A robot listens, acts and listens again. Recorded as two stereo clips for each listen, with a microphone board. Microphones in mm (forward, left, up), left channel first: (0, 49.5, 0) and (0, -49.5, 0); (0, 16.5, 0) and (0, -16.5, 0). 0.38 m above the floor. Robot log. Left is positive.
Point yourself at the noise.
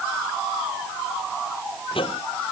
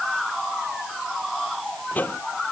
note: The microwave: about 60° left or 120° left.
cmd yaw +60
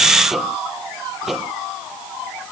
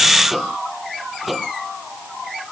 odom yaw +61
end: Facing the microwave.